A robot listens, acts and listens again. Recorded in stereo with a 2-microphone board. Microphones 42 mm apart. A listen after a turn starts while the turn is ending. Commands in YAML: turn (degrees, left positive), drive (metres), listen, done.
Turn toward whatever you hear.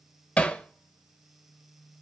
turn: 30
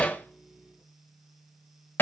turn: 115
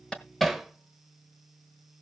done: "Facing the hammering."